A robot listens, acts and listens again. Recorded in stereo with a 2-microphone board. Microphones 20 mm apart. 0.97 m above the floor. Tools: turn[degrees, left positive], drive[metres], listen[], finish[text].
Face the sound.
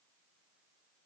Action: listen[]
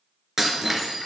Thought: The breaking glass: about 20° right or 160° right.
Action: turn[-20]
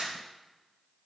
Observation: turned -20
Thought: So it is at 140° right.
Action: turn[-140]
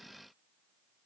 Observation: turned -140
Action: finish[Facing where the breaking glass came from. I can't hear it now.]